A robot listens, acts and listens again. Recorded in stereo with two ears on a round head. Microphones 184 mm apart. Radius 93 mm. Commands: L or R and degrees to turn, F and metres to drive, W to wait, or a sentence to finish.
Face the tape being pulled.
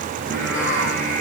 W
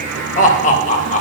W
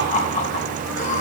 I can't make out tape being pulled, only singing and laughter.